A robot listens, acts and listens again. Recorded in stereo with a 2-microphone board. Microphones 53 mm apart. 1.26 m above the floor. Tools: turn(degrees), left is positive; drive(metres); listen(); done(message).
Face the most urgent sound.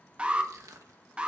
turn(degrees=-20)
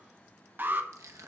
turn(degrees=-140)
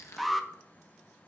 done("Found it: an alarm, straight ahead.")